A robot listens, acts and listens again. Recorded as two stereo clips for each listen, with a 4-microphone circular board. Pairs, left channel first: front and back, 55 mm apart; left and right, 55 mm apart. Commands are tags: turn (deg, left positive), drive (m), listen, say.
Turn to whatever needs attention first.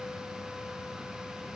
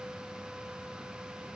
<listen/>
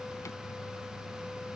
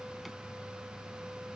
<listen/>
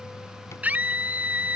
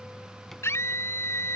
<turn deg="120"/>
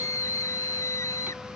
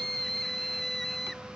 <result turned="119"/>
<say>Facing the scream.</say>